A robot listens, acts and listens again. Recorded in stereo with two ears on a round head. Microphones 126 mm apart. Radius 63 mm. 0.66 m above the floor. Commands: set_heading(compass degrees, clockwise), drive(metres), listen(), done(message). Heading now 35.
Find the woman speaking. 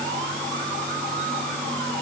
listen()
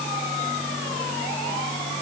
listen()
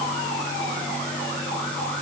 done("I can't make out a woman speaking to turn to.")